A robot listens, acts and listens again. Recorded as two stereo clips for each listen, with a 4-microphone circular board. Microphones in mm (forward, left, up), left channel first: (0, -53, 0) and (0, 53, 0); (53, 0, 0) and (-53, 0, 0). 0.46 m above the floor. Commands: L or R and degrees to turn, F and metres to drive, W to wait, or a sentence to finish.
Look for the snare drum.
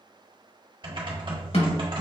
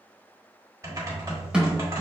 R100
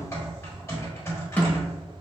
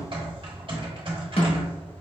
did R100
R15
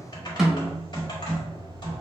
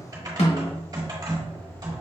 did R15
Facing the snare drum, 1 to 2 m away.